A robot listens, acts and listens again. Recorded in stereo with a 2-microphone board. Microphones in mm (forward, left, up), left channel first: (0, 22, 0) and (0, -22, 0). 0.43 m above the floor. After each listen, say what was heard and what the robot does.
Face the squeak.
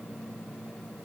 Keep listening.
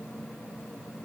Keep listening.
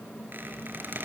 The squeak: about 50° right or 130° right. Turn 50° right.
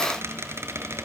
So it is at 80° right. Turn 80° right.
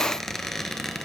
Facing the squeak, 2 to 4 m away.